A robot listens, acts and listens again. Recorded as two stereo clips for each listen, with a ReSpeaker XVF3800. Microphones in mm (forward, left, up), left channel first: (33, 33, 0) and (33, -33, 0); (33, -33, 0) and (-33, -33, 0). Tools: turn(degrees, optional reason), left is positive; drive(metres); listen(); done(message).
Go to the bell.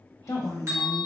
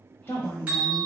turn(degrees=-115, reason="The bell: 115° right.")
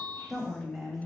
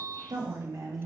turn(degrees=15, reason="The bell is now 15° left.")
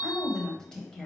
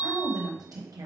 drive(metres=1.0)
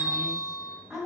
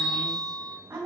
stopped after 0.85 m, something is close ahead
turn(degrees=10, reason="The bell is now 10° left.")
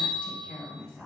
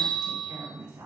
done("I am next to the bell.")